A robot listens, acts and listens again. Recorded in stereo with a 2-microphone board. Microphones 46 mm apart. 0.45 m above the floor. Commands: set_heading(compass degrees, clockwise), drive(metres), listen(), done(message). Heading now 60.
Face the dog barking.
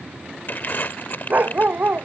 set_heading(100)
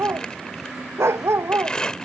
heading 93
set_heading(193)
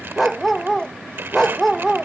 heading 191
done("Found it: a dog barking, straight ahead.")